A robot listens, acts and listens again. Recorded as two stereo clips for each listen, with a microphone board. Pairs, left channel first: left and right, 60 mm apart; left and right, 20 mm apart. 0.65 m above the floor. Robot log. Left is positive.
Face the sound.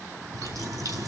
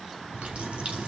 cmd yaw -90
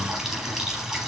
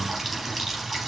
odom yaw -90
end: Found it: a running tap, straight ahead, 2 to 4 m away.